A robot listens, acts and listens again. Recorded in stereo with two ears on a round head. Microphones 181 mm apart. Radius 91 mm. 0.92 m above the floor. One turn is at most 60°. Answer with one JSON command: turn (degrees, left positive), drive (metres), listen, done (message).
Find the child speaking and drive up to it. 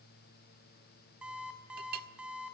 {"listen": true}
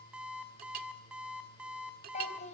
{"turn": 40}
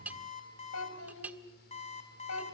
{"turn": 60}
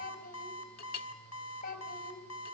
{"turn": 45}
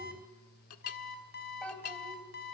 {"drive": 1.0}
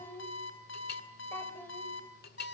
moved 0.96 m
{"turn": 10}
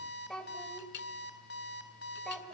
{"drive": 1.0}
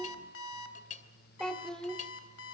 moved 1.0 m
{"drive": 1.0}
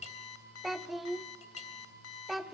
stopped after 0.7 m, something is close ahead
{"done": "I am next to the child speaking."}